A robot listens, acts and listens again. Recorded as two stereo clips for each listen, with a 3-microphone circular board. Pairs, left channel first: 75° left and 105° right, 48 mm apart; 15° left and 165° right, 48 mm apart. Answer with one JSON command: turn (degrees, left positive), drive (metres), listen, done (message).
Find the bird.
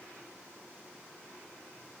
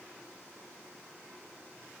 {"listen": true}
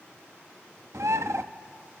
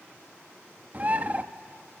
{"turn": -110}
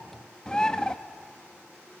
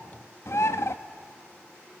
{"done": "Facing the bird, under 1 m away."}